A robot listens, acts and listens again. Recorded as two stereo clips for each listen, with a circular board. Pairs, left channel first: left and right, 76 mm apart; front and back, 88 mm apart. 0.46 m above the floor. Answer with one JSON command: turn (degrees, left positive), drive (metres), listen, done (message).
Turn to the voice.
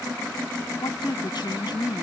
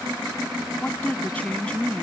{"turn": 75}
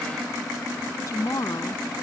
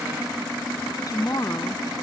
{"turn": 45}
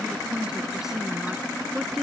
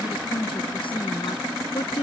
{"done": "Facing the woman speaking."}